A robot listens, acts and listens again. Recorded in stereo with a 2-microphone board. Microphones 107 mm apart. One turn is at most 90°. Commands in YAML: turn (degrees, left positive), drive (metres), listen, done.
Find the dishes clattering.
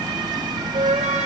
listen: true
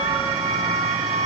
listen: true
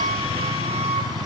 done: "I can't make out dishes clattering, only a flute."